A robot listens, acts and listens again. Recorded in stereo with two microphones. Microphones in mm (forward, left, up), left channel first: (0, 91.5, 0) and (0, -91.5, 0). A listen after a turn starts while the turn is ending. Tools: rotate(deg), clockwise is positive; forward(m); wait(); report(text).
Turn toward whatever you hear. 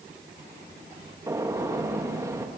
rotate(15)
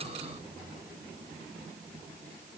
wait()
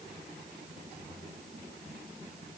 report("I heard a gunshot, but can't make it out now. It was about straight ahead or 150° right.")